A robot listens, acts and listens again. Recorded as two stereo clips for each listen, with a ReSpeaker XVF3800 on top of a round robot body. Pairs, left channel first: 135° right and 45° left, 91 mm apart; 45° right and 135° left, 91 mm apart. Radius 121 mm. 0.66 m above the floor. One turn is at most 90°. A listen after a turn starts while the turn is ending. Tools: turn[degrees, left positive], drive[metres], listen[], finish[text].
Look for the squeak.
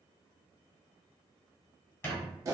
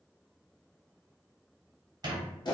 Thought: The squeak: 165° left.
Action: turn[90]
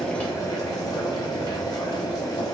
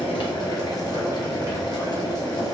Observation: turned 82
Thought: Nothing new. It was at 80° left.
Action: turn[80]
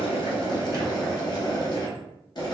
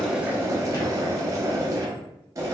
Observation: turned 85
Action: listen[]
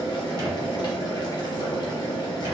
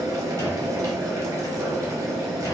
Action: finish[Facing where the squeak came from. I can't hear it now.]